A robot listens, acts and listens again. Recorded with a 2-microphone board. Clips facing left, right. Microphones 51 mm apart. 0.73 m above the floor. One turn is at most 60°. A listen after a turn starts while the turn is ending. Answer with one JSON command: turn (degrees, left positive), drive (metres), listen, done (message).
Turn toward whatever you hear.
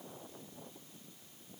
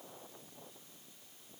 {"listen": true}
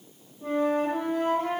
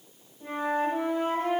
{"turn": -30}
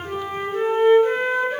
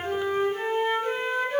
{"turn": 15}
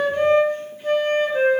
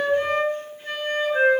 {"done": "Facing the flute, 1 to 2 m away."}